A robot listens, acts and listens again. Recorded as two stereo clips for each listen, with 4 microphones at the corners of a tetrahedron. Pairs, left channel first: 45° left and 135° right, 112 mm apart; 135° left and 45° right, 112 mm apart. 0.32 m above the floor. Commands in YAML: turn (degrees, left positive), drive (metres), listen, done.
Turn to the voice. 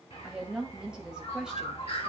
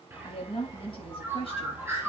turn: 145
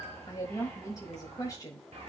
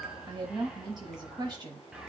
done: "Facing the woman speaking."